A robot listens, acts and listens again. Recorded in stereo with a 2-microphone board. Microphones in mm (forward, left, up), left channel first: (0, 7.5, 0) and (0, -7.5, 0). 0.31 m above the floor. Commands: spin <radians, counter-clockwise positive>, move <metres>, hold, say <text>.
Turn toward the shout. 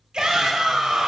spin -0.96
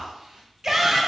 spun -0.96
spin -0.87
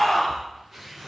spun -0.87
say Found it: a shout, straight ahead.